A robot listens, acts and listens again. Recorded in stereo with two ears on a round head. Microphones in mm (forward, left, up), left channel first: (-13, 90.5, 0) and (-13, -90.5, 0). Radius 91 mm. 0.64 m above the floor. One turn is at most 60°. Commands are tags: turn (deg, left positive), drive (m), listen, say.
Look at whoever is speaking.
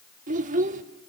<turn deg="-40"/>
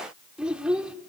<say>Facing the child speaking, 1 to 2 m away.</say>